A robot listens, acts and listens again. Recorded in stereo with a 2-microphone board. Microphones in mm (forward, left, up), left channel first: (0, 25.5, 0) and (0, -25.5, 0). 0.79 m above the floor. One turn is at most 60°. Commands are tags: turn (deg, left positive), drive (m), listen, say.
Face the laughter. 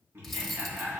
<turn deg="-55"/>
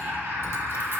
<turn deg="-60"/>
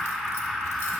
<say>Found it: laughter, straight ahead, 1 to 2 m away.</say>